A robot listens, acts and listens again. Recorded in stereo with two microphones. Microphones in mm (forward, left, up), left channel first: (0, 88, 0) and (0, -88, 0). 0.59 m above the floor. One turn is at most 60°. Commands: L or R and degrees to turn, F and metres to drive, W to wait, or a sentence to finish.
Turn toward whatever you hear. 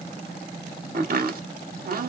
R55
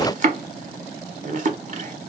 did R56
R55
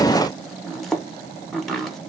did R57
Facing the chopping.